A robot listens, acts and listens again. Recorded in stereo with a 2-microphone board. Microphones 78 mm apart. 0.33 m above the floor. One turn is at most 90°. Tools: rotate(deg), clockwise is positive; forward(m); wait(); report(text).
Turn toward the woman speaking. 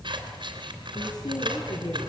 rotate(-60)
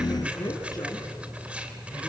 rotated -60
rotate(-50)
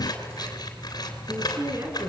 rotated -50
rotate(35)
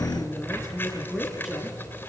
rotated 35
report("Found it: a woman speaking, straight ahead.")